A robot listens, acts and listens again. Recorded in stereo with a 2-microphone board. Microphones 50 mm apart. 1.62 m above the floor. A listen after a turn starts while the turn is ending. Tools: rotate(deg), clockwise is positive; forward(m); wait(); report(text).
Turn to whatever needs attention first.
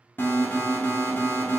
rotate(-45)
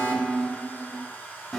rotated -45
report("Facing the alarm.")